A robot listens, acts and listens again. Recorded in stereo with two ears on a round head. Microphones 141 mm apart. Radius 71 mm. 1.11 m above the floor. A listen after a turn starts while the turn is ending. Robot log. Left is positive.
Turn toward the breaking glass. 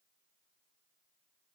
cmd idle
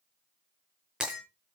cmd yaw -30
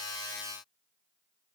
cmd idle
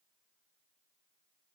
end: I heard breaking glass, but can't make it out now. It was about 25° left or 145° right.